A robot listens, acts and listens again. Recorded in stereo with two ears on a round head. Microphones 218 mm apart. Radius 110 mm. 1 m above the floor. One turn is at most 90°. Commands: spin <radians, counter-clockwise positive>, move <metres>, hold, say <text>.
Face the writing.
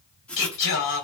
spin 0.52
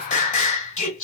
hold
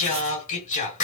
hold
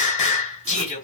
say I heard writing, but can't make it out now. It was about 25° right or 145° left.